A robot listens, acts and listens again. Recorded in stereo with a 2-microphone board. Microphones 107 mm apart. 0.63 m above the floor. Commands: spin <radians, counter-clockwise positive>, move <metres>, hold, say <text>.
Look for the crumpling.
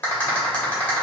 hold
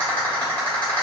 hold
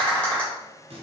spin -1.05
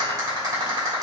hold
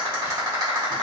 hold
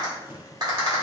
spin -0.35
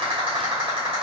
hold
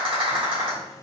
hold
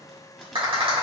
say Found it: crumpling, straight ahead.